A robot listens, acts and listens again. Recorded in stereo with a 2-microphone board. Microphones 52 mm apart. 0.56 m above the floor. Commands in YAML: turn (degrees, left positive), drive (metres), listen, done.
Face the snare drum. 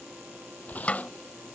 turn: 25
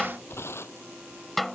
done: "Found it: a snare drum, straight ahead."